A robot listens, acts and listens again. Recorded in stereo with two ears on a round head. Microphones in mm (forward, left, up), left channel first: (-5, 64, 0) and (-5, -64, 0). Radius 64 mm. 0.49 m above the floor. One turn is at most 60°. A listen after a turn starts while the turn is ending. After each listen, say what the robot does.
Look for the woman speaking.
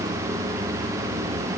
Keep listening.
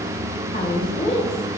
Turn 50° left.
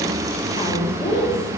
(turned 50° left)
Turn 60° left.
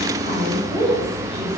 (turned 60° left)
Turn 35° left.
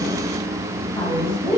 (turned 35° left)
Turn 30° left.
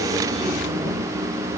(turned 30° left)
Keep listening.
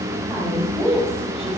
Found it: a woman speaking, straight ahead, 2 to 4 m away.